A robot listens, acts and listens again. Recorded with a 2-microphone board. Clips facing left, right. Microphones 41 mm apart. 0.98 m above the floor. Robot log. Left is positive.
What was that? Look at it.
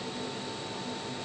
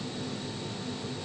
cmd idle
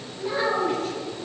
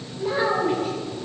cmd yaw -30
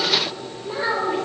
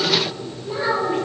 end: Found it: a child speaking, straight ahead.